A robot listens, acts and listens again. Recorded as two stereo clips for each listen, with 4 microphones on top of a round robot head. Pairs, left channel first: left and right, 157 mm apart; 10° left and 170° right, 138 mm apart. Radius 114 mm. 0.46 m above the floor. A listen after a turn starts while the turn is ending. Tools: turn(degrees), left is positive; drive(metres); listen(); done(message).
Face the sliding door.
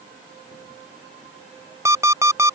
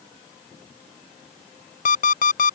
listen()
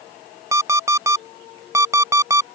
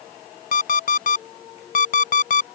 listen()
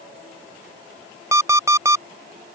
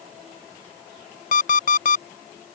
done("I can't make out a sliding door to turn to.")